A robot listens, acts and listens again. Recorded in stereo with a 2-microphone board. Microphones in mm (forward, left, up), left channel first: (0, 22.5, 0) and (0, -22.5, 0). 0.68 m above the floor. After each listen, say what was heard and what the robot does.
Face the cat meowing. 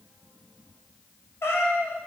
Turn 90° left.
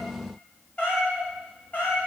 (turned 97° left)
So it is at 35° left. Turn 35° left.
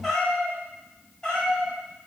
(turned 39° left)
The cat meowing is now 15° left. Turn 15° left.
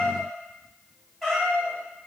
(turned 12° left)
Found it: a cat meowing, straight ahead, 2 to 4 m away.